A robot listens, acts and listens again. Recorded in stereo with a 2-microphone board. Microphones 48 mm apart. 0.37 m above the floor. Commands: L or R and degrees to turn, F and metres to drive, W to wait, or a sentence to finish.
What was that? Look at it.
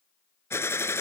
L65
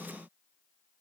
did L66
W
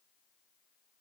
I heard a gunshot, but can't make it out now. It was about straight ahead or 50° left.